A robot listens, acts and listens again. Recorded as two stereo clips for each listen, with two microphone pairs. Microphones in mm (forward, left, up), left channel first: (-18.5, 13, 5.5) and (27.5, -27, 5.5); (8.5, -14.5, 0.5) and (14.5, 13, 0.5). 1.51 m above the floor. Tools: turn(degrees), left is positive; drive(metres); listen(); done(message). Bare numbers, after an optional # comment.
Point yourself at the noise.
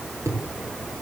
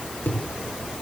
# The thud: 80° right.
turn(-80)
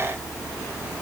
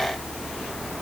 done("Facing where the thud came from. I can't hear it now.")